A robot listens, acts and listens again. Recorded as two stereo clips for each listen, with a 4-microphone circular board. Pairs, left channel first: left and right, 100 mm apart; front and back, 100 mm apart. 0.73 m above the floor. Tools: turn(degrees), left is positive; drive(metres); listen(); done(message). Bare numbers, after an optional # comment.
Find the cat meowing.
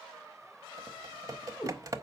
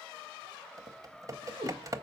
# The cat meowing: 155° left.
turn(155)
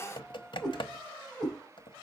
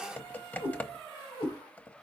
# The cat meowing is now 10° left.
turn(10)
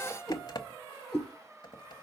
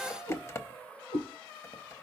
done("Facing the cat meowing.")